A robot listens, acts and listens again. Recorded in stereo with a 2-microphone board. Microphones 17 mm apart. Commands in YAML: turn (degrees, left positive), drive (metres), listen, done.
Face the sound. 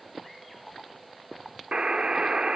turn: -60
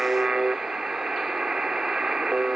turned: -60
turn: -50
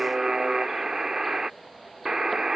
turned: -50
turn: -35
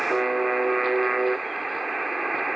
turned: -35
done: "Found it: a buzzer, straight ahead."